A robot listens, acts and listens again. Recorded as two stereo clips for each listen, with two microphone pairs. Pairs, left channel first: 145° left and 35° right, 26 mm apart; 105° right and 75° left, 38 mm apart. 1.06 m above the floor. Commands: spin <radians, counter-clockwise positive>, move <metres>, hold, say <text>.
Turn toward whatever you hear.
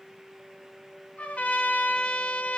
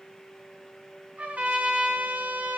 spin 2.27
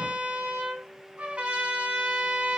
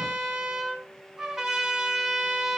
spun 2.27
say Facing the trumpet, over 4 m away.